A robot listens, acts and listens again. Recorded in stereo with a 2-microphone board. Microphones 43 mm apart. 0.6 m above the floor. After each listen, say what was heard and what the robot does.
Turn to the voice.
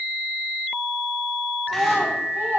The child speaking: about 55° right or 125° right. Turn 55° right.
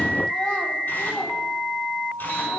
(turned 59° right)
Keep listening.
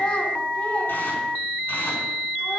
So it is at 25° left. Turn 25° left.
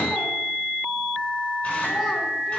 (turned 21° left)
Keep listening.
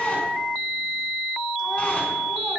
Keep listening.
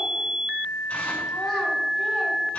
Facing where the child speaking came from. I can't hear it now.